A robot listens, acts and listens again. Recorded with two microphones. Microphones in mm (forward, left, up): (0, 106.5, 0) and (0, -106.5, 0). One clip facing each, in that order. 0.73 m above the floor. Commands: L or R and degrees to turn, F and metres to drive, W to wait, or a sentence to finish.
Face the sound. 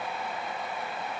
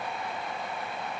W
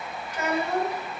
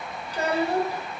R30
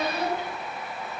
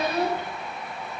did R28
R125
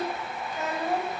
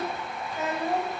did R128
Facing the child speaking.